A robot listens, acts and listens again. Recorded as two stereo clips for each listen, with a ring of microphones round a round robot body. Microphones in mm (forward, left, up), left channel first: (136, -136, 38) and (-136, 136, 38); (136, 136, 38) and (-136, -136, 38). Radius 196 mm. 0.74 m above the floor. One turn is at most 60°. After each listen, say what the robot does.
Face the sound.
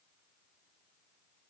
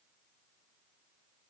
Keep listening.
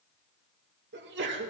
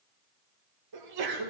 Turn 60° right.
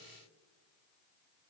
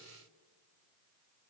Turn 60° right.
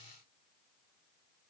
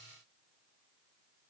Turn 45° right.
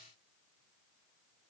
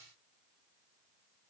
Facing where the sneeze came from. I can't hear it now.